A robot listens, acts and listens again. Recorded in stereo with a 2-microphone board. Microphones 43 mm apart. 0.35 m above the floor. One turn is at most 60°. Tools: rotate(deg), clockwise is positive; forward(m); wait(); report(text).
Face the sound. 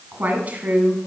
rotate(35)
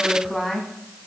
report("Facing the woman speaking.")